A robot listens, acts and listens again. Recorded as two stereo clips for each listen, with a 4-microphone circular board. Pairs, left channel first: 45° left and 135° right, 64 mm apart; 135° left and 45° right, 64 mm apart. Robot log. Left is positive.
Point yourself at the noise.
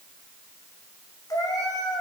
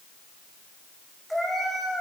note: The cat meowing: 45° left.
cmd yaw +45
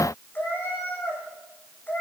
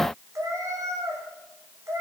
note: The cat meowing is now 10° right.
cmd yaw -10
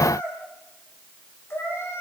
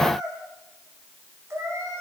end: Found it: a cat meowing, straight ahead.